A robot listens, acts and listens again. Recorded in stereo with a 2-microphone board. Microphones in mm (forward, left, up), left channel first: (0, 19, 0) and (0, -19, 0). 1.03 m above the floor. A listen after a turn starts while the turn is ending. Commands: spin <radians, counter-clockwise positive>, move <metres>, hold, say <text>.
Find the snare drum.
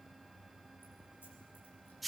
hold
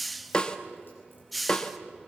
spin 0.44
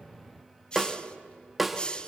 say Found it: a snare drum, straight ahead, 1 to 2 m away.